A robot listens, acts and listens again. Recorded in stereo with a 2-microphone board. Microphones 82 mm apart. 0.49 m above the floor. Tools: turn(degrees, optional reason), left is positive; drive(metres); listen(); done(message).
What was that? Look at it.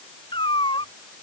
turn(degrees=90)
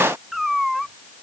done("Found it: a cat meowing, straight ahead.")